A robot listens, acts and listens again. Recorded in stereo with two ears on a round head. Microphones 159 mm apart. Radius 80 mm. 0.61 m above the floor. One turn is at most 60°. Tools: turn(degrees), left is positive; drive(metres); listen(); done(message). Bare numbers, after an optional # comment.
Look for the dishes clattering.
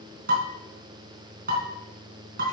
# The dishes clattering: about 50° right or 130° right.
turn(-50)
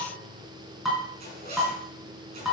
done("Facing the dishes clattering.")